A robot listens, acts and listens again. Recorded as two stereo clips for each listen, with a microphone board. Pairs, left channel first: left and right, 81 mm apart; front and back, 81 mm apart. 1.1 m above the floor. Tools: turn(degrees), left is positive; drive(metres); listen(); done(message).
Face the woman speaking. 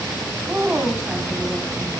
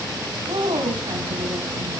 turn(degrees=-170)
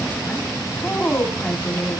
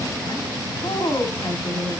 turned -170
turn(degrees=20)
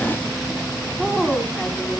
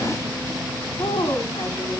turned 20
done("Facing the woman speaking.")